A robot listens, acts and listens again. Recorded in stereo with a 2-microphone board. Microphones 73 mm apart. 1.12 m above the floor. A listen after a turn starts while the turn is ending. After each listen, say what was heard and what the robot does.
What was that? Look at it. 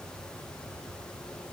Keep listening.
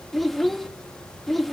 Turn 30° left.
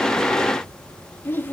So it is at 150° left. Turn 150° left.
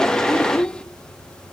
The child speaking is now 10° left. Turn 10° left.
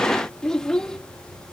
The child speaking is now 10° left. Turn 10° left.
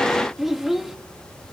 Found it: a child speaking, straight ahead, 1 to 2 m away.